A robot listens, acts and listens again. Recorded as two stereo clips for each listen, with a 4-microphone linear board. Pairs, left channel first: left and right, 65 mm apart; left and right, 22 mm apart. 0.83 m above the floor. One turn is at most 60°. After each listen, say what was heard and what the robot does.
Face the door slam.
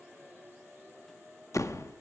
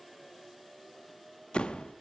The door slam: about 50° left or 130° left. Turn 50° left.
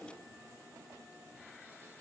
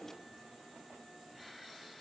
Keep listening.
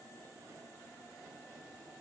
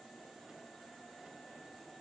I heard a door slam, but can't make it out now. It was about straight ahead or 80° left.